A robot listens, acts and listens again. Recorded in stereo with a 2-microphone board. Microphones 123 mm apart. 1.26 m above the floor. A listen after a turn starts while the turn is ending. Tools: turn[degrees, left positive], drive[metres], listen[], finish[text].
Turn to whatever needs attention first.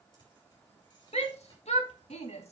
Thought: The shout: about 60° left or 120° left.
Action: turn[60]
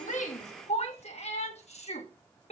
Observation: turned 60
Thought: So it is at 60° left.
Action: turn[60]
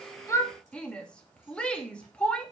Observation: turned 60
Thought: The shout is now 10° left.
Action: turn[10]
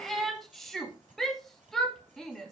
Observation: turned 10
Action: finish[Found it: a shout, straight ahead, 2 to 4 m away.]